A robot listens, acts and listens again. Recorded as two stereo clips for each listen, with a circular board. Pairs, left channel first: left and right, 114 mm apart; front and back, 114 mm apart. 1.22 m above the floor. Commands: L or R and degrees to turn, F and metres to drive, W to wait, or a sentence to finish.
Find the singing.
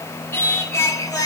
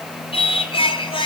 L35
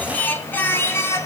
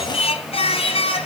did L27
L25
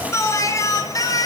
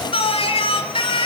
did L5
L40
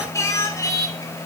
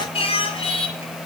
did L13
L35
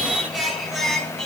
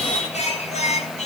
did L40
Facing the singing, 2 to 4 m away.